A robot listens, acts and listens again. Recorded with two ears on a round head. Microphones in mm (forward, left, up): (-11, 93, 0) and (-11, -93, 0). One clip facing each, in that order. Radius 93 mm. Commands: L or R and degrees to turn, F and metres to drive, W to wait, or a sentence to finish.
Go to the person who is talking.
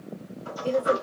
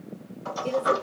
R20
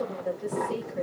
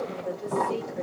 F1.0
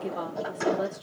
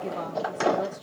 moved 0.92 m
L10
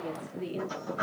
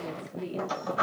F1.0
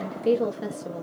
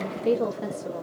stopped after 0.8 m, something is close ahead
I am next to the woman speaking.